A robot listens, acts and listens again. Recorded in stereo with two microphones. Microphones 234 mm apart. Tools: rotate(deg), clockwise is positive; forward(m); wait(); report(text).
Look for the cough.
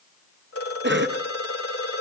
rotate(50)
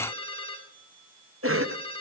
rotate(75)
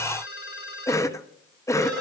rotate(-15)
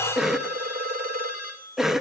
report("Found it: a cough, straight ahead.")